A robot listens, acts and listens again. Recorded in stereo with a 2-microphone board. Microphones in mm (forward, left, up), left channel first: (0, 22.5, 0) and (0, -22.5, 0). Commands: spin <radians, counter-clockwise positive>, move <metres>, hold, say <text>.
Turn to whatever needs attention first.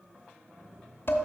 hold
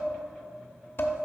hold
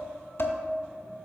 say I can't make out anything urgent to turn to.